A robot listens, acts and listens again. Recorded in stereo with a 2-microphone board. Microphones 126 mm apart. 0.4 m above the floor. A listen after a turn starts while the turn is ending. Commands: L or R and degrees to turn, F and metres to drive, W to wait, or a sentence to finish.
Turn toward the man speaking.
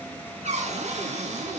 W
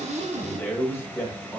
L25
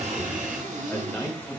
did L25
L15
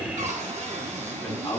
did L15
L15
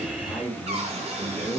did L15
L30
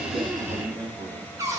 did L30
R20
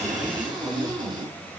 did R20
W
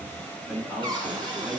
R10
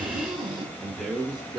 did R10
Facing the man speaking, 2 to 4 m away.